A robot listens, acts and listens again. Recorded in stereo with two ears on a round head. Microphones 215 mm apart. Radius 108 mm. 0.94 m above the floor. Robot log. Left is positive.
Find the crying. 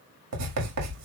cmd idle
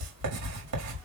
cmd idle
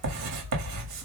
end: I can't make out crying to turn to.